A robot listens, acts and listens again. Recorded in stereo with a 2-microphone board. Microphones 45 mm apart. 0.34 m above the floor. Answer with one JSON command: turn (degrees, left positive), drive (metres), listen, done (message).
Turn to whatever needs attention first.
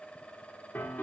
{"listen": true}
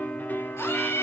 {"turn": 90}
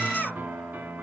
{"done": "Found it: a scream, straight ahead, over 4 m away."}